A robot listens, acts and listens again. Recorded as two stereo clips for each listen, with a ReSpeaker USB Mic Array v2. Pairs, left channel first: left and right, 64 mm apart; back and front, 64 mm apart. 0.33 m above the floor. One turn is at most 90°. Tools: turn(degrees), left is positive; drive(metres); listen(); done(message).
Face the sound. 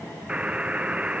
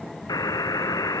turn(degrees=-90)
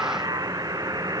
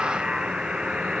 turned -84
turn(degrees=-75)
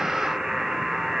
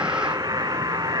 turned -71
done("Facing the buzzer.")